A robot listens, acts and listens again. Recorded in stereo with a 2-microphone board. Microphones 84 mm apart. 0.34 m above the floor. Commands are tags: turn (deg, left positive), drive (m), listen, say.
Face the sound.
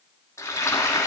<turn deg="35"/>
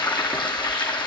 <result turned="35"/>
<turn deg="115"/>
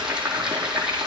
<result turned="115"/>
<turn deg="-10"/>
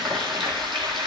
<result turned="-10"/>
<say>Found it: frying, straight ahead, over 4 m away.</say>